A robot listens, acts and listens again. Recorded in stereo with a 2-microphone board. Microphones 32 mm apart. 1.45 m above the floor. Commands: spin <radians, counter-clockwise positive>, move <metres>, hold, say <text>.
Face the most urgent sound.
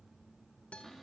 hold
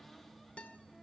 hold
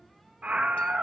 spin -0.79
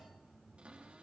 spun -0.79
hold
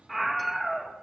say Found it: a scream, straight ahead.